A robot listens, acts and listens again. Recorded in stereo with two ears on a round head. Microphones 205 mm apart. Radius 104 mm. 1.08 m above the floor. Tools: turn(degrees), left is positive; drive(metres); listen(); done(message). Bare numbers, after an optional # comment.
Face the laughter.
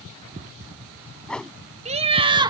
# The laughter: about 20° right or 160° right.
turn(-20)
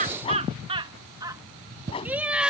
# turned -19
turn(-30)
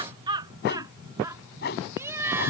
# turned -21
turn(-30)
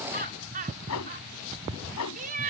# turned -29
# So it is at 140° right.
turn(-140)
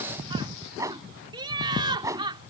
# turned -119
# The laughter is now 20° right.
turn(-20)
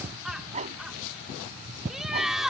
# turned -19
done("Facing the laughter.")